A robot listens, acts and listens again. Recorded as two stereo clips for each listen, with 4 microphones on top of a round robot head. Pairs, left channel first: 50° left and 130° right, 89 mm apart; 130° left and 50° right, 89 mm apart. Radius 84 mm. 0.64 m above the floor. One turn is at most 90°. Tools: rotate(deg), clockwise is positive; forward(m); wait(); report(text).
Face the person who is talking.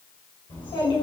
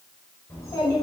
rotate(-75)
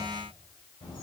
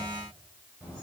rotate(-15)
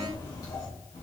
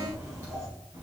report("Found it: a child speaking, straight ahead.")